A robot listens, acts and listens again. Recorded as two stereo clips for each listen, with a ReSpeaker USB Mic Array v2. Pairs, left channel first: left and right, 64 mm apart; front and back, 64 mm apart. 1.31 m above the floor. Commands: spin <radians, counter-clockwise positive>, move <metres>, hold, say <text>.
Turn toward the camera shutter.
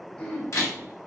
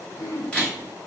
spin 1.22
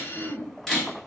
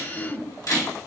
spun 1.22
say Facing the camera shutter, 2 to 4 m away.